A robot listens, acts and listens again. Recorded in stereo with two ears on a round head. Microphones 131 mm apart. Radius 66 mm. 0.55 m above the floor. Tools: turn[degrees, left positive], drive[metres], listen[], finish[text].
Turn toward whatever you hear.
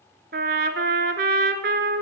Thought: The trumpet: about 70° right or 110° right.
Action: turn[-70]
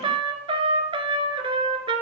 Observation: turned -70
Thought: So it is at 35° right.
Action: turn[-35]
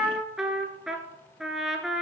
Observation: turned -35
Action: finish[Found it: a trumpet, straight ahead, 1 to 2 m away.]